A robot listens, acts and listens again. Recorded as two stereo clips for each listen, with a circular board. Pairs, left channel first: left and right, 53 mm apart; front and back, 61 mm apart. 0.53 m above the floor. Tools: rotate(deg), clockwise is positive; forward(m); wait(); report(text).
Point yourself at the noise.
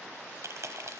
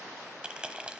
rotate(110)
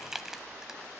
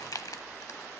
report("Found it: crushing, straight ahead.")